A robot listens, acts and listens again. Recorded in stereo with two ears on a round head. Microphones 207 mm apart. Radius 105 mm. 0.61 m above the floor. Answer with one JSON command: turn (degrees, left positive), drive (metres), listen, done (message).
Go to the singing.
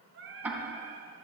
{"turn": -60}
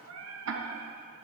{"turn": -65}
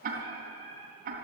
{"turn": 15}
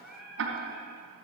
{"drive": 1.0}
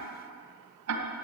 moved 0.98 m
{"listen": true}
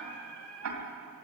{"drive": 1.0}
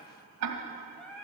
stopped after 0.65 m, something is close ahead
{"done": "Arrived at the singing, straight ahead."}